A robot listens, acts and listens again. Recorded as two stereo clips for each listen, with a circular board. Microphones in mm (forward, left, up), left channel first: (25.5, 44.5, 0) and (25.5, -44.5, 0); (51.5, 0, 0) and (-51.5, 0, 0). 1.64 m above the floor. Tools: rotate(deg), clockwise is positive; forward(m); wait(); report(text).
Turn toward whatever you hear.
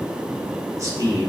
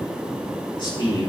rotate(40)
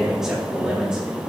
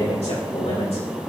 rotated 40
rotate(10)
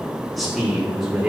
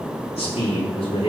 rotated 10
report("Found it: a man speaking, straight ahead.")